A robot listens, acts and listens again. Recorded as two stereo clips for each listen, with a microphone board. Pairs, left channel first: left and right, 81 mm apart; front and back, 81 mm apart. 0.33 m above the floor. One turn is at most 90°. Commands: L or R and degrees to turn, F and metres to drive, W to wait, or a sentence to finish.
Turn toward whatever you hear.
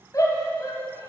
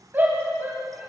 L90
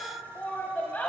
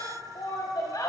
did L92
L25
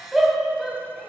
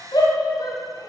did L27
Found it: a shout, straight ahead.